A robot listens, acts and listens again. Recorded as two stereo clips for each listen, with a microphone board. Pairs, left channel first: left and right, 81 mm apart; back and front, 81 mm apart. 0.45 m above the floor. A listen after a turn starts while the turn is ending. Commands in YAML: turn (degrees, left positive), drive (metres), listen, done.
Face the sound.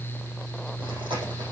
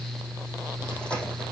turn: -100
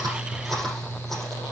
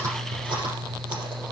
done: "Found it: chewing, straight ahead."